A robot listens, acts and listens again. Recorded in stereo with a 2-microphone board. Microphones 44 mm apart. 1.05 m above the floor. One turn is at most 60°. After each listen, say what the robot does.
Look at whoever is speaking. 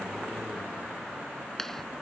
Keep listening.
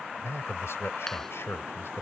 Turn 60° left.
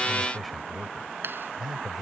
Facing the man speaking.